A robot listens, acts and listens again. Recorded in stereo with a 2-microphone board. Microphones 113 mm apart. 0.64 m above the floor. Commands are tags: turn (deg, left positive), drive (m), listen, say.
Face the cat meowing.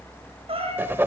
<turn deg="-60"/>
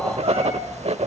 <listen/>
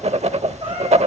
<listen/>
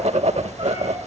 <say>I heard a cat meowing, but can't make it out now. It was about straight ahead or 60° right.</say>